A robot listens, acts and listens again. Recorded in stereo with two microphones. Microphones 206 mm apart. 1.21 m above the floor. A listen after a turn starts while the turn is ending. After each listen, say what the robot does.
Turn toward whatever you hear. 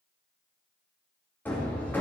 Turn 30° left.
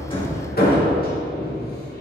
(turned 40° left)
Turn 130° left.
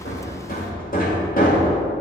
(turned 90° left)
Turn 40° left.
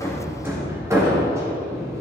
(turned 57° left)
Turn 15° right.
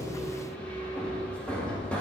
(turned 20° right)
Facing the hammering, 1 to 2 m away.